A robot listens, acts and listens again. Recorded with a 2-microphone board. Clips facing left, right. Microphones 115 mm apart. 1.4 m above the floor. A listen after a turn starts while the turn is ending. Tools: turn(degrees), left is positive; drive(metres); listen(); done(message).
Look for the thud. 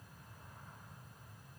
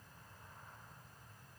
listen()
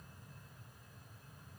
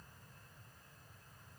listen()
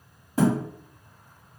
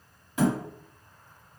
turn(degrees=40)
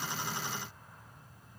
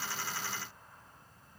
listen()
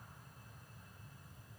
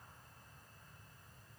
done("I heard a thud, but can't make it out now. It was about straight ahead or 100° left.")